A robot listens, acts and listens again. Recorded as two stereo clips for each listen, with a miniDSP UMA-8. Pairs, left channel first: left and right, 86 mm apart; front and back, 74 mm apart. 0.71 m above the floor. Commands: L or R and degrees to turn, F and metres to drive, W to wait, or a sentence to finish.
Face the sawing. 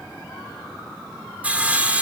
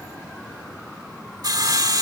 R160
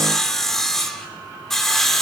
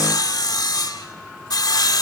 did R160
Found it: sawing, straight ahead.